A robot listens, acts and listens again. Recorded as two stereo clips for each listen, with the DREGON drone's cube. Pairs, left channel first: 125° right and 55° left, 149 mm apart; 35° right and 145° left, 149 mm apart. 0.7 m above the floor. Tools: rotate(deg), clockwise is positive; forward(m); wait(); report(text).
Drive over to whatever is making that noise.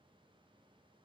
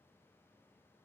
wait()
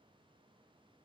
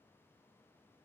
wait()
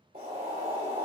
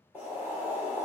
rotate(-70)
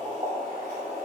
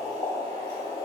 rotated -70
rotate(-25)
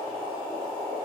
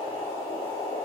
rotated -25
rotate(-10)
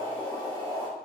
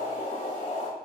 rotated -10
forward(1.0)
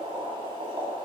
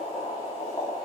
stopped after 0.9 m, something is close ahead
report("I am next to the boiling.")